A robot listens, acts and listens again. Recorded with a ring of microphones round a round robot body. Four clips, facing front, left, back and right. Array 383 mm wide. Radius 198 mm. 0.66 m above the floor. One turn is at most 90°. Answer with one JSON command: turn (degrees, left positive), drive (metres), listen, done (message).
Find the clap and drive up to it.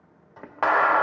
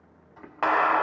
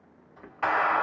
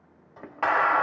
{"turn": 15}
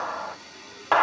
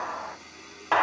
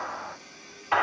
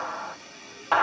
{"drive": 1.0}
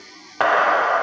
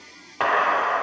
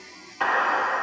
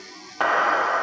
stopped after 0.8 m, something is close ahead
{"done": "Arrived at the clap, straight ahead."}